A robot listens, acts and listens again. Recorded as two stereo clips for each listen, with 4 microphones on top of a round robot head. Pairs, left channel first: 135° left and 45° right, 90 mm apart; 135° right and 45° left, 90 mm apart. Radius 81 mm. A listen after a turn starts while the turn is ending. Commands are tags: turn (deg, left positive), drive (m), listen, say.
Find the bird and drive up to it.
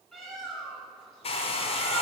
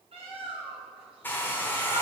<turn deg="45"/>
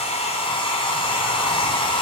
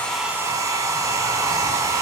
<listen/>
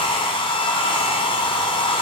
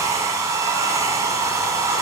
<listen/>
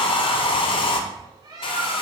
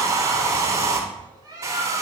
<drive m="1.0"/>
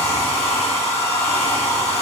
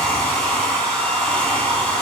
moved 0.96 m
<listen/>
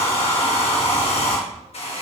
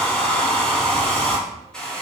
<listen/>
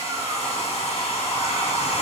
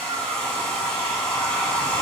<say>Facing where the bird came from. I can't hear it now. I did not reach it.</say>